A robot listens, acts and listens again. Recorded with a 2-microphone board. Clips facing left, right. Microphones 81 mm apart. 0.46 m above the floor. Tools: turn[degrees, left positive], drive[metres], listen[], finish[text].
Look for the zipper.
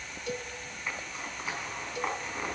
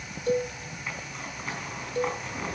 Action: turn[30]
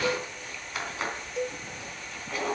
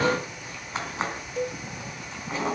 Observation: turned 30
Thought: So it is at 30° right.
Action: turn[-30]
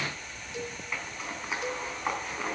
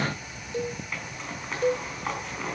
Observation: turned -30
Thought: The zipper is now 10° left.
Action: turn[10]
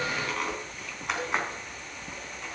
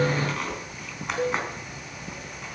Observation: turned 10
Action: finish[Facing the zipper, 2 to 4 m away.]